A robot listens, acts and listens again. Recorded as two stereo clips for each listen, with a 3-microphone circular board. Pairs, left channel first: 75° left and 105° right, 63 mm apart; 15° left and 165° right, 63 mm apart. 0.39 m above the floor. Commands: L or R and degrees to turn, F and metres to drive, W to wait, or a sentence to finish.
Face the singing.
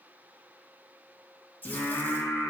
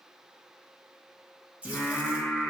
L100
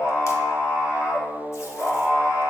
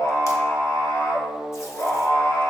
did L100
L50
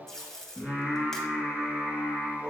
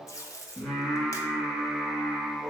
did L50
Facing the singing, 2 to 4 m away.